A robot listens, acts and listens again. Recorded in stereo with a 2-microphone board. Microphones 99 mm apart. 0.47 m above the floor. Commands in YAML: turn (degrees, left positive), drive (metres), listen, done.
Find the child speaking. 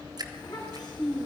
turn: 50
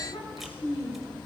turn: 75
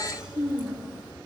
turn: -10
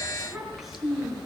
done: "Facing the child speaking, 2 to 4 m away."